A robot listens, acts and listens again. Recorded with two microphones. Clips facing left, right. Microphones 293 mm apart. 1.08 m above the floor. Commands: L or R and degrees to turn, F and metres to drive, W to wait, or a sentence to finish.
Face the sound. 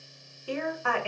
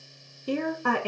R45
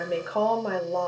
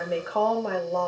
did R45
Found it: a woman speaking, straight ahead.